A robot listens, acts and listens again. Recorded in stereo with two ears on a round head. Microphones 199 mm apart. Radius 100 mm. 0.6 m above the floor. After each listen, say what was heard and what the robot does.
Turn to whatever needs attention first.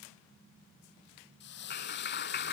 Keep listening.
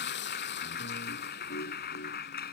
Keep listening.
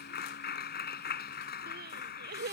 The crying: about 45° right or 135° right. Turn 45° right.
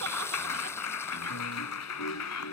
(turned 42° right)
Keep listening.
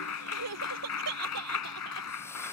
So it is at 90° right. Turn 90° right.
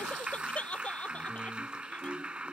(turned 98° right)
Found it: crying, straight ahead.